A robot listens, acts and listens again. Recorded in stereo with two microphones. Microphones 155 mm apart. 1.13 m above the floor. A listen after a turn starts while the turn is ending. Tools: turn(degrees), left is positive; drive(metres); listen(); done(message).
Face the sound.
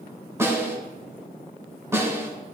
turn(degrees=-20)
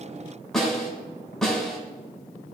done("Facing the snare drum, 2 to 4 m away.")